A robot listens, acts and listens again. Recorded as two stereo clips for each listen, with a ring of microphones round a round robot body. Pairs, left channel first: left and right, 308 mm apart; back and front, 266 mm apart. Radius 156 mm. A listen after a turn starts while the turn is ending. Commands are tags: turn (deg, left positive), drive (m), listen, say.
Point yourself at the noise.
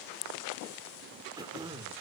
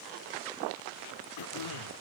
<turn deg="-170"/>
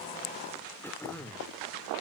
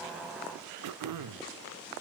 <say>Found it: throat clearing, straight ahead.</say>